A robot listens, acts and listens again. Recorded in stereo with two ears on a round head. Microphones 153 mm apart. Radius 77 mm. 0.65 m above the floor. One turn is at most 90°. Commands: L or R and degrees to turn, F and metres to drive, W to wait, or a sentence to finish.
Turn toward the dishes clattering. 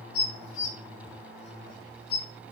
L70
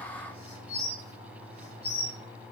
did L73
L30
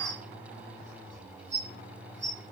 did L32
Found it: dishes clattering, straight ahead, 1 to 2 m away.